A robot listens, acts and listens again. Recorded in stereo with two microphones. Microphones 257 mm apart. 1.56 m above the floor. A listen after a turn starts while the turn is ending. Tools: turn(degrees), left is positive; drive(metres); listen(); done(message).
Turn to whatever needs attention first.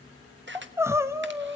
turn(degrees=-30)
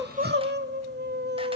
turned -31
turn(degrees=-135)
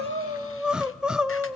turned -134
done("Found it: crying, straight ahead, under 1 m away.")